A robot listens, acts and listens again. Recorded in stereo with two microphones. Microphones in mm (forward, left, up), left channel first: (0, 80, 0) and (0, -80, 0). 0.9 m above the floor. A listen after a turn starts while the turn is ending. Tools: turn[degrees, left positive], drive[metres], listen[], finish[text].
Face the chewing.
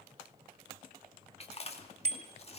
Thought: The chewing: about 40° left or 140° left.
Action: turn[40]
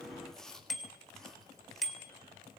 Action: finish[Facing the chewing, 2 to 4 m away.]